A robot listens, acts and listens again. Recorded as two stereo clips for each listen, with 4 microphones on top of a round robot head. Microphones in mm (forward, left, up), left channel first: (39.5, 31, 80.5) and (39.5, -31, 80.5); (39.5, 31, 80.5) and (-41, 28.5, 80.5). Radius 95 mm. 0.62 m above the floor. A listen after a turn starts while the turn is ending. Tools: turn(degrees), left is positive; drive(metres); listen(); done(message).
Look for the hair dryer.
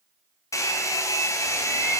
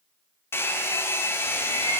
turn(degrees=60)
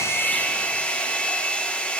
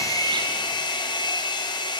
turn(degrees=20)
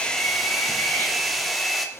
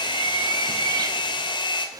done("Found it: a hair dryer, straight ahead.")